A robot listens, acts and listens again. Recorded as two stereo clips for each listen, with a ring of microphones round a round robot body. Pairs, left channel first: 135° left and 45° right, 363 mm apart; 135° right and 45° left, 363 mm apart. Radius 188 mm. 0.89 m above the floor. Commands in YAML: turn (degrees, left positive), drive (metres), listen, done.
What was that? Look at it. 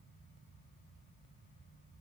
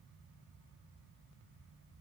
listen: true
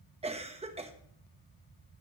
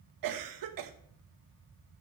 turn: 25
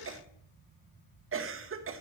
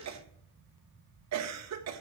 done: "Found it: a cough, straight ahead."